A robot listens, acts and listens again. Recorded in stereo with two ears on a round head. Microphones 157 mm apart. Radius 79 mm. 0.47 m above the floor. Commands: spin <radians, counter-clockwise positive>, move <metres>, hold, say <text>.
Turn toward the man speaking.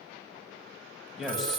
spin 0.52
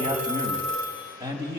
spin -0.35
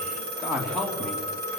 say Found it: a man speaking, straight ahead.